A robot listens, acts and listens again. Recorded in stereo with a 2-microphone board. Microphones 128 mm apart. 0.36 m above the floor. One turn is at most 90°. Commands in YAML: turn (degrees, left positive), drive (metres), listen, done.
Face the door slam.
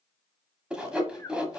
listen: true
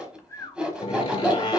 turn: 40
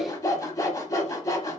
listen: true
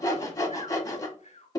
done: "I heard a door slam, but can't make it out now. It was about straight ahead or 100° left."